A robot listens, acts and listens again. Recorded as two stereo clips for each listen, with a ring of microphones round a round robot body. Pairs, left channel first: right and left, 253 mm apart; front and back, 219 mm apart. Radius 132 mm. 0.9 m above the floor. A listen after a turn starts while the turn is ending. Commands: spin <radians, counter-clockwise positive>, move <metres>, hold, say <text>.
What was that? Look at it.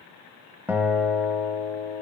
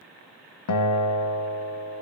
say Facing the guitar, under 1 m away.